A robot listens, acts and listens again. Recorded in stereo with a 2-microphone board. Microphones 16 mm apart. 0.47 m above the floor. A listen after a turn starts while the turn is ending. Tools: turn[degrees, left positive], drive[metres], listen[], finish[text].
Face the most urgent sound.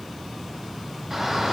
Thought: The shout: about 20° right or 160° right.
Action: turn[-20]
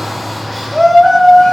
Action: finish[Found it: a shout, straight ahead, over 4 m away.]